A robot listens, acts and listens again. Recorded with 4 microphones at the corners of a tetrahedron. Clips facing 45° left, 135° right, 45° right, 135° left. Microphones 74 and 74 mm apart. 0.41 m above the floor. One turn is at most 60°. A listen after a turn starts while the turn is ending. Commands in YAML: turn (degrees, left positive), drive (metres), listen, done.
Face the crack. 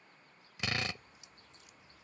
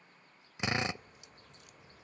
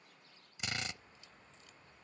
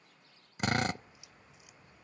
turn: -60
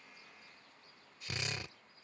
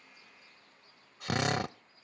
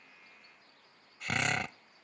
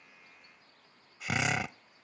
turn: -60
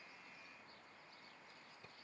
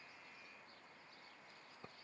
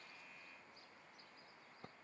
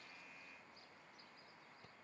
turn: -30
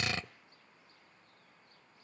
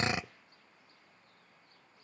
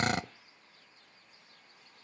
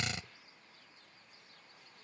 done: "Facing where the crack came from. I can't hear it now."